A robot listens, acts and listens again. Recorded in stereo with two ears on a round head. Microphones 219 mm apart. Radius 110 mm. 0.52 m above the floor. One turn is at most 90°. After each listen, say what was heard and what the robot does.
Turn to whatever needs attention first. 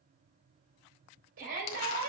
The shout: about 55° right or 125° right. Turn 55° right.
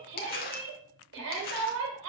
So it is at 60° right. Turn 60° right.
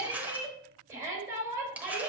The shout is now 15° right. Turn 15° right.
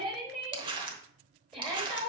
Facing the shout.